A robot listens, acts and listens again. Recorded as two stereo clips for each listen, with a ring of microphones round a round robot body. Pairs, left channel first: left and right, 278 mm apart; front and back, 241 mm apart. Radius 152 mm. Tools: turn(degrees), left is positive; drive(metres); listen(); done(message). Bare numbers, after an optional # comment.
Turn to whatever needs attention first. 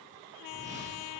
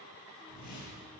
listen()
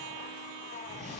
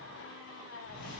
listen()
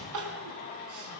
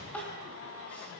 # The crying: 85° right.
turn(-85)
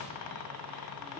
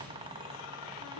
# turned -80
done("Found it: crying, straight ahead, 2 to 4 m away.")